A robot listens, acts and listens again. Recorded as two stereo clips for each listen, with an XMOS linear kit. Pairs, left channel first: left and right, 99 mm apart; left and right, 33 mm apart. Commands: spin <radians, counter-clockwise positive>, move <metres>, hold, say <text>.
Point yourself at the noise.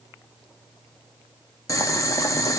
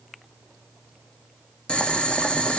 spin 0.52
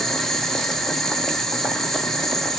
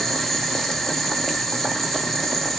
say Facing the boiling, under 1 m away.